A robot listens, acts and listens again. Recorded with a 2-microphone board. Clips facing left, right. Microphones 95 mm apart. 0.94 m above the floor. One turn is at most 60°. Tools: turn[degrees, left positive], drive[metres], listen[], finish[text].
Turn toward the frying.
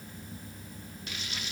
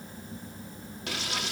Action: turn[-60]
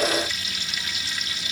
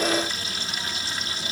Thought: So it is at 40° right.
Action: turn[-40]
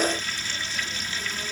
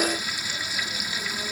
Thought: The frying is now 10° right.
Action: turn[-10]
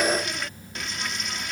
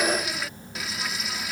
Action: finish[Found it: frying, straight ahead.]